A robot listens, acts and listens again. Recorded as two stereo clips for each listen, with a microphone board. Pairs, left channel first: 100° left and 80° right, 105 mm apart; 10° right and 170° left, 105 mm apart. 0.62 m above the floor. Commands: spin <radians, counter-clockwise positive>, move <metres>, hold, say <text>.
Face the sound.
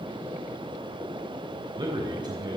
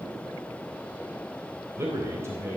spin -2.18
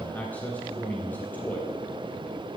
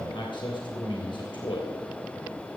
spin 0.44
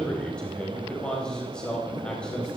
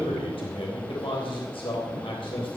spin 0.35
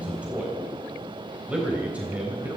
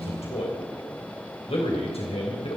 say Facing the man speaking, 2 to 4 m away.